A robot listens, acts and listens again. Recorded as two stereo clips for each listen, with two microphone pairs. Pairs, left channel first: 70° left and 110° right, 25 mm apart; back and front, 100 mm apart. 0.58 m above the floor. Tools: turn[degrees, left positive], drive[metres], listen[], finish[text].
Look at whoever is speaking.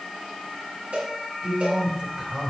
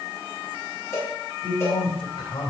Thought: The man speaking: 150° right.
Action: turn[-150]
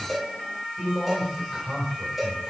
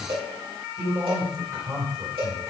Thought: The man speaking is now 55° right.
Action: turn[-55]
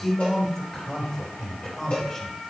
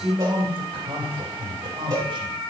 Thought: The man speaking is now 15° left.
Action: turn[15]
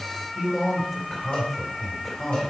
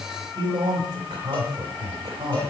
Action: finish[Facing the man speaking, 2 to 4 m away.]